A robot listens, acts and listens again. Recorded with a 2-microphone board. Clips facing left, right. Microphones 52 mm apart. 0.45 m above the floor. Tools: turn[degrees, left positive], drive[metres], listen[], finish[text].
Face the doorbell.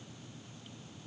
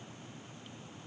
Action: listen[]
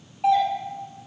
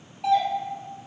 Thought: The doorbell: about 20° left or 160° left.
Action: turn[20]
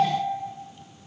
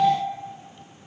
Thought: So it is at 135° left.
Action: turn[135]
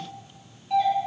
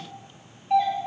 Thought: The doorbell is now 30° right.
Action: turn[-30]
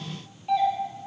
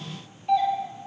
Action: finish[Facing the doorbell.]